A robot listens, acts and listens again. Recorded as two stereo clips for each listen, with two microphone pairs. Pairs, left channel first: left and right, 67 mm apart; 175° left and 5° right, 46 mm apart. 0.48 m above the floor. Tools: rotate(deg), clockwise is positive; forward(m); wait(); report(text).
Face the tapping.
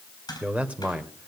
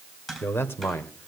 rotate(-90)
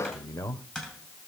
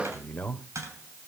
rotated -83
rotate(-10)
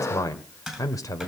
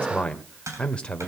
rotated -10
report("Facing the tapping.")